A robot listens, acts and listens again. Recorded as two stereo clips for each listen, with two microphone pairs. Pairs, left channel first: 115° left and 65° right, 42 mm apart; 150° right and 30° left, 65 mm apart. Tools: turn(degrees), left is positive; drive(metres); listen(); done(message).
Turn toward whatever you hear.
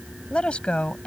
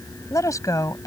turn(degrees=180)
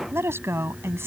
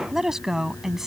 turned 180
turn(degrees=-50)
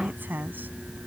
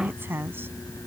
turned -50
turn(degrees=-25)
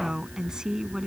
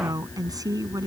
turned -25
turn(degrees=10)
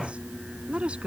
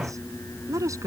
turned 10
done("Found it: a woman speaking, straight ahead.")